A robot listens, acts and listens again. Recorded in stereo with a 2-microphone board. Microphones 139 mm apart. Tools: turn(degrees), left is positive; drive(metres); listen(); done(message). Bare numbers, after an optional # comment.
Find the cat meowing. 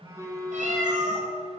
# The cat meowing: about 65° right or 115° right.
turn(-65)
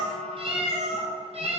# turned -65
# So it is at 50° right.
turn(-50)
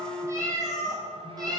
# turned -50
# The cat meowing is now 30° right.
turn(-30)
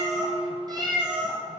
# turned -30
# The cat meowing is now 35° right.
turn(-35)
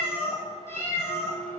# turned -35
# The cat meowing is now 20° left.
turn(20)
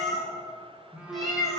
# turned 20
done("Facing the cat meowing.")